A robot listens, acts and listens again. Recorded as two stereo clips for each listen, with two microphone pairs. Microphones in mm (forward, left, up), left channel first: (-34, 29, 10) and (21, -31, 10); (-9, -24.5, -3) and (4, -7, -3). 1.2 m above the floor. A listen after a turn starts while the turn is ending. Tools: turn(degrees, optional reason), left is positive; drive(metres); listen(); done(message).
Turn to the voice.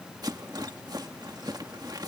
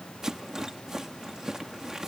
listen()
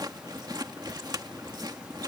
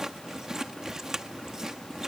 listen()
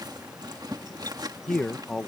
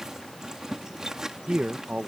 turn(degrees=50, reason="The man speaking: 50° left.")
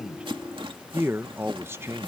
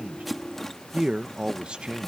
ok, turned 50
turn(degrees=10, reason="The man speaking is now 10° left.")
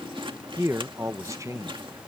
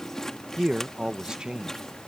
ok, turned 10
done("Facing the man speaking.")